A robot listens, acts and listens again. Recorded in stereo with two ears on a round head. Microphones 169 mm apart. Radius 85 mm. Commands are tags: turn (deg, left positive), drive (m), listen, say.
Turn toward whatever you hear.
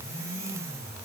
<listen/>
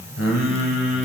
<turn deg="70"/>
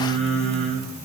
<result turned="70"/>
<say>Found it: singing, straight ahead, under 1 m away.</say>